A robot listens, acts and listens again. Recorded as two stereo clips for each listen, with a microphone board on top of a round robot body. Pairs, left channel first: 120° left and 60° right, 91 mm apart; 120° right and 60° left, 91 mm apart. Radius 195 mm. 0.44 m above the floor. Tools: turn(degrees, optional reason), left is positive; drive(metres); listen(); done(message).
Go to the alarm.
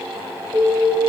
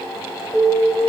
turn(degrees=-35, reason="The alarm: 35° right.")
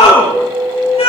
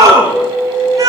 turn(degrees=-10, reason="The alarm is now 10° right.")
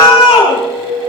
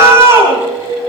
drive(metres=1.0)
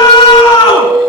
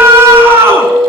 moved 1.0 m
drive(metres=1.0)
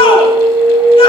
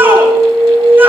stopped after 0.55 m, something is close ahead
turn(degrees=-10, reason="The alarm is now 10° right.")
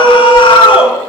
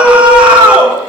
listen()
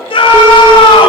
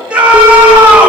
listen()
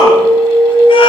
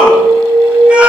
done("Arrived at the alarm, straight ahead.")